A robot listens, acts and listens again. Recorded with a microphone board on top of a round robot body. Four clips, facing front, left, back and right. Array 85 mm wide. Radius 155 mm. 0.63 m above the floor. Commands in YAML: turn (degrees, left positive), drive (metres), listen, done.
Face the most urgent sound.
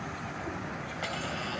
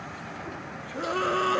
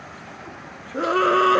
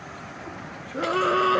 turn: -165
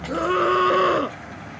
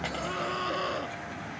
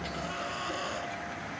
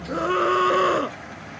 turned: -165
turn: -40
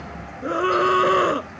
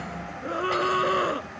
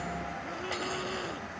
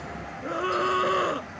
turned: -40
done: "Facing the scream."